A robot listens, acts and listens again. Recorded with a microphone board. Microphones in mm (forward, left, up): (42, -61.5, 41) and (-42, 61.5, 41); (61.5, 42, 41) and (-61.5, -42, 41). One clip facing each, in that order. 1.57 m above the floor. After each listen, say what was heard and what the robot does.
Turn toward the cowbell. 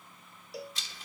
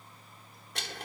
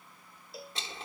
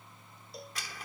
The cowbell: 50° right. Turn 50° right.
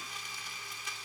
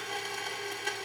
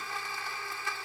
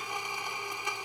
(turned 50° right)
Keep listening.
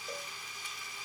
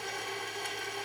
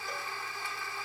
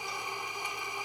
Keep listening.
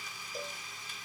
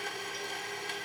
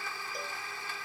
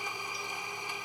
I heard a cowbell from this way, but can't make it out now.